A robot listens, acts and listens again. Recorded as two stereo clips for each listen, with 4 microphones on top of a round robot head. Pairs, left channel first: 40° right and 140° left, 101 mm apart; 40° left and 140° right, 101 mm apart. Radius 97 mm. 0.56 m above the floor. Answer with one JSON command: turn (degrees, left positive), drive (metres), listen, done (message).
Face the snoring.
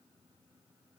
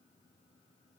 {"listen": true}
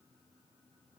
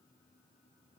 {"listen": true}
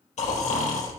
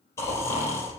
{"turn": -25}
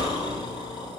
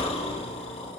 {"turn": 10}
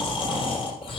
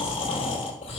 {"done": "Found it: snoring, straight ahead."}